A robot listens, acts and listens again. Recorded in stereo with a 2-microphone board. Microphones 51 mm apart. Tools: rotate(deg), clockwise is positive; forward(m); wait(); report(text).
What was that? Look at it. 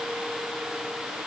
wait()
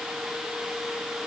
wait()
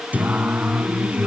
rotate(30)
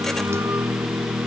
rotate(125)
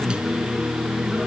rotate(20)
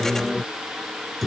report("Facing the singing.")